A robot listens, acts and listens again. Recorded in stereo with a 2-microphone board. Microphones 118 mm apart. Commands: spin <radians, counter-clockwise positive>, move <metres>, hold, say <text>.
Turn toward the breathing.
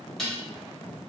hold
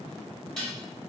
hold
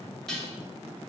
say I can't make out breathing, only dishes clattering.